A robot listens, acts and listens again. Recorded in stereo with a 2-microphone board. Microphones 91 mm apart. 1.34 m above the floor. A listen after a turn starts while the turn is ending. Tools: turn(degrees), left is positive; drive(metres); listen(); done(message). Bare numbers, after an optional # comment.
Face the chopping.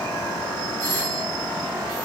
listen()
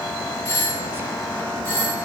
listen()
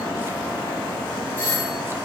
done("I can't make out chopping, only a doorbell.")